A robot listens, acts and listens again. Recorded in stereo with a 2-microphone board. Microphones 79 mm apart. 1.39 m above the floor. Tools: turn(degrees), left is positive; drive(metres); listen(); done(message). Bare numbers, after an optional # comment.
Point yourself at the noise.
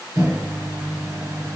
# The microwave: about 45° right or 135° right.
turn(-45)
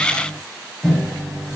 done("Facing the microwave, over 4 m away.")